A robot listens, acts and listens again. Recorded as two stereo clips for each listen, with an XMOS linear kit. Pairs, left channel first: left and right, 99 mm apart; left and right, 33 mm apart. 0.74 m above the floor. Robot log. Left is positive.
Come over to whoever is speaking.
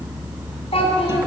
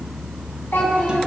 cmd yaw +90
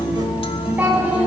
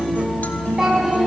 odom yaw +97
note: So it is at 15° right.
cmd yaw -15
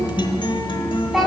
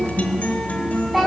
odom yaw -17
cmd fwd 1.0
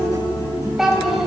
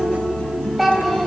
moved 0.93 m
cmd fwd 1.0
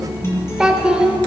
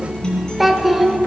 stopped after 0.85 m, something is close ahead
end: I am next to the child speaking.